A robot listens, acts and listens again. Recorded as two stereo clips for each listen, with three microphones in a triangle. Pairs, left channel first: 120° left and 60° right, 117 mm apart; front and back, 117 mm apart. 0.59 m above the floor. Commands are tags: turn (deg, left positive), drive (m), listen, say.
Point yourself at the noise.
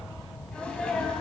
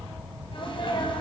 <turn deg="40"/>
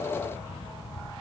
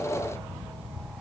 <say>I heard a sneeze from this way, but can't make it out now.</say>